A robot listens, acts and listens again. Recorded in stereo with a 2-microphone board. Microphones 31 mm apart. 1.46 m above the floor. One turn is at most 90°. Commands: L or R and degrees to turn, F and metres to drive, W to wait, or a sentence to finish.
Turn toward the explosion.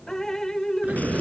R90
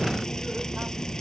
I heard an explosion from this way, but can't make it out now.